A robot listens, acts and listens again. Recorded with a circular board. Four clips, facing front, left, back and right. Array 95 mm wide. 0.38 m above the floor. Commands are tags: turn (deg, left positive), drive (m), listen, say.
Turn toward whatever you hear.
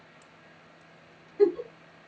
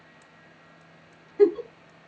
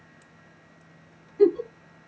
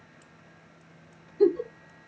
<turn deg="90"/>
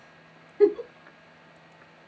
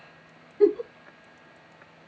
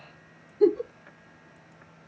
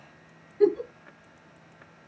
<turn deg="20"/>
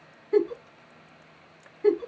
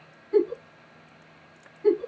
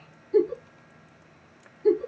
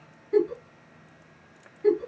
<say>Found it: a giggle, straight ahead, under 1 m away.</say>